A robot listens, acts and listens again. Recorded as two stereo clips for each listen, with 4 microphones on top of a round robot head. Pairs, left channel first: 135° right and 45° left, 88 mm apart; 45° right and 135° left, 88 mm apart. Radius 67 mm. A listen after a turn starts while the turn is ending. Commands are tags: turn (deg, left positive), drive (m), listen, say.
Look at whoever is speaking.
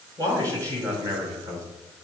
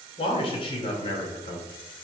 <turn deg="-15"/>
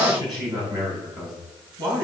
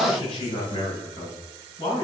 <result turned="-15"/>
<say>Found it: a man speaking, straight ahead, over 4 m away.</say>